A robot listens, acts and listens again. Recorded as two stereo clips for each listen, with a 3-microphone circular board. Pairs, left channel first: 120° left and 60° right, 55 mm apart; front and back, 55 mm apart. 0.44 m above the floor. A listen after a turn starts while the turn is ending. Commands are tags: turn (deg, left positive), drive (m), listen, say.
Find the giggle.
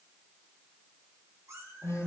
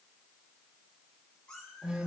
<listen/>
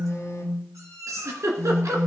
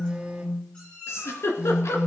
<turn deg="-35"/>
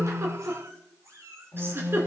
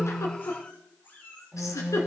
<turn deg="-15"/>
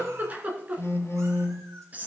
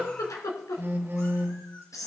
<say>Found it: a giggle, straight ahead.</say>